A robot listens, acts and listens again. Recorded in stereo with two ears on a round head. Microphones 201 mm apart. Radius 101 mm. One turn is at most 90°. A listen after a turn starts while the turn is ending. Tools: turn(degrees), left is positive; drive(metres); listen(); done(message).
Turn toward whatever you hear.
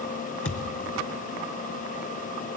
turn(degrees=65)
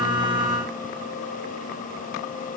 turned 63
listen()
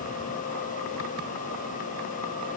done("I heard a thud, but can't make it out now. It was about straight ahead or 55° left.")